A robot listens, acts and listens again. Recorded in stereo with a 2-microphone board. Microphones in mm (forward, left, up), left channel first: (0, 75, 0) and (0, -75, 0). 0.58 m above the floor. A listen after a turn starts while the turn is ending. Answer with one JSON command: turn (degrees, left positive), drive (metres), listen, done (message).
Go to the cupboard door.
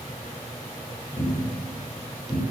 {"turn": 25}
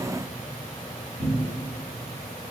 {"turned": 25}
{"drive": 1.0}
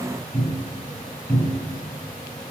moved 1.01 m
{"drive": 1.0}
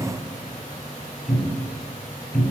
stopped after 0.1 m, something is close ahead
{"done": "I am next to the cupboard door."}